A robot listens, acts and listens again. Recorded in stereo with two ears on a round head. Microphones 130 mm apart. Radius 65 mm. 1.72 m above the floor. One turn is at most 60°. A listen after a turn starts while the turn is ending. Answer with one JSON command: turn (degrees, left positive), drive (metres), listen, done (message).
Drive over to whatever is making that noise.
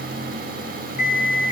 {"turn": 55}
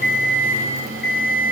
{"turn": 60}
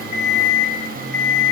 {"turn": 15}
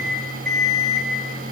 {"drive": 1.0}
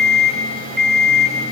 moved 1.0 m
{"drive": 1.0}
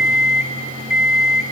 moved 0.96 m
{"turn": -10}
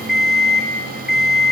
{"drive": 1.0}
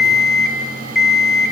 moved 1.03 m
{"drive": 1.0}
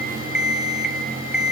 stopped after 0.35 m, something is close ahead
{"done": "Arrived at the alarm clock, straight ahead."}